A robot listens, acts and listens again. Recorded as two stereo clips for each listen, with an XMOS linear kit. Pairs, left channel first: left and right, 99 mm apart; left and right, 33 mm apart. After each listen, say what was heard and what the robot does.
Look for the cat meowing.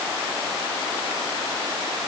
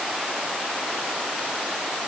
Keep listening.
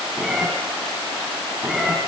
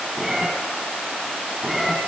Turn 30° left.
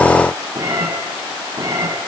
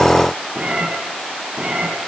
So it is at 35° right. Turn 35° right.
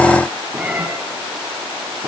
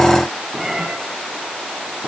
The cat meowing is now 10° right. Turn 10° right.
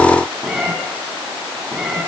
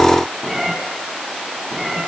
Found it: a cat meowing, straight ahead, over 4 m away.